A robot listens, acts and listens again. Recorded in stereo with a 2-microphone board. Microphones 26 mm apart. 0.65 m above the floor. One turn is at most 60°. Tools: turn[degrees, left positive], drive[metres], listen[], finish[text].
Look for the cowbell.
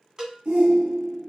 Thought: The cowbell: about 30° right or 150° right.
Action: turn[-30]
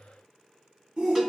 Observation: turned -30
Action: listen[]
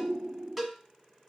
Action: finish[Facing the cowbell.]